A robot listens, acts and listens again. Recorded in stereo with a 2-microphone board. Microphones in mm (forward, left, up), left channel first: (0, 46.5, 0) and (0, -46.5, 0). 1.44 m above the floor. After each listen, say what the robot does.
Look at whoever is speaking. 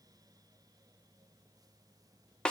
Keep listening.
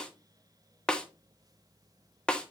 Keep listening.
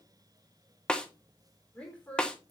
Turn 20° left.
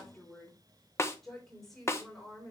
Turn 30° left.
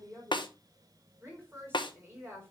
Turn 20° right.
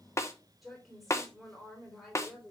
Facing the woman speaking, 2 to 4 m away.